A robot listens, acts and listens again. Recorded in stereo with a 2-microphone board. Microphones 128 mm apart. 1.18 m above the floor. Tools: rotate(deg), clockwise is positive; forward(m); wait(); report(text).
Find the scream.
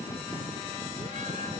wait()
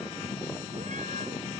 wait()
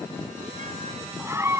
rotate(20)
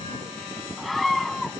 report("Found it: a scream, straight ahead.")